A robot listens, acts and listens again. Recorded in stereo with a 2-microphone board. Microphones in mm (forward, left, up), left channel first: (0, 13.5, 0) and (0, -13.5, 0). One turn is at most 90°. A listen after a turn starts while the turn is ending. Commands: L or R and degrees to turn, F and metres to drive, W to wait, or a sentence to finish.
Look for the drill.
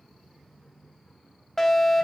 W
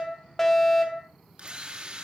R30
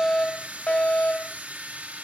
R90
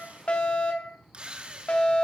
R45
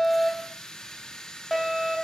L20
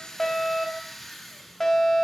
Found it: a drill, straight ahead.